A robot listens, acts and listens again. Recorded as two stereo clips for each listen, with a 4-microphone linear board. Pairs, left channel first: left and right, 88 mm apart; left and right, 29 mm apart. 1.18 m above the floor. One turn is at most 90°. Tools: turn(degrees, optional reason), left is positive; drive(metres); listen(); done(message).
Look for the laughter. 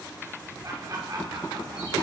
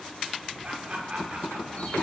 turn(degrees=-45, reason="The laughter: about 45° right or 135° right.")
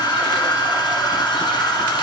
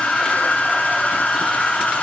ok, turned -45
listen()
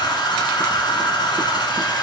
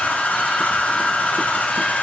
listen()
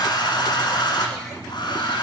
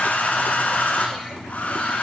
done("I heard laughter, but can't make it out now. It was about straight ahead or 90° right.")